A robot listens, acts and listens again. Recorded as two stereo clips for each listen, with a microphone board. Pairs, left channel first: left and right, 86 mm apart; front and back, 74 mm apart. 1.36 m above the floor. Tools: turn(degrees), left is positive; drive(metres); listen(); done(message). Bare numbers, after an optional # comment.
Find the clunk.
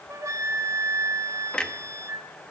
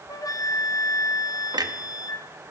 # The clunk: 170° left.
turn(170)
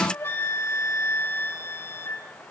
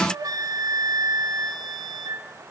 done("I heard a clunk from this way, but can't make it out now.")